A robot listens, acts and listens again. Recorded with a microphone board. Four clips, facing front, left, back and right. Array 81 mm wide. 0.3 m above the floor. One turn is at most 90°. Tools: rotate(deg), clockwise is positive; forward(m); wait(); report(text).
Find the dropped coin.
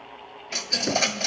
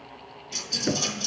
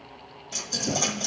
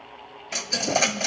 rotate(60)
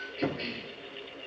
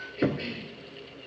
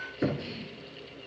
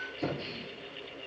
report("Facing where the dropped coin came from. I can't hear it now.")